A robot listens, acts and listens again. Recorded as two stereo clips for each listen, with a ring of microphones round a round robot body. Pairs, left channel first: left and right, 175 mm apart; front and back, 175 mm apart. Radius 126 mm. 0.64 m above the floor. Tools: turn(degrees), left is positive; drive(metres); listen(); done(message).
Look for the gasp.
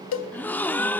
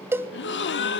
turn(degrees=10)
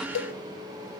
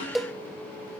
done("Facing where the gasp came from. I can't hear it now.")